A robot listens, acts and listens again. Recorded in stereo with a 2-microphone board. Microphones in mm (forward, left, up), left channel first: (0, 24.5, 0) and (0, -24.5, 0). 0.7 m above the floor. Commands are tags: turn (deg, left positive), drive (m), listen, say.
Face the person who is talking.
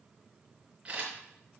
<listen/>
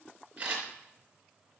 <listen/>
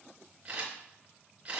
<say>I can't make out anyone speaking, only a camera shutter.</say>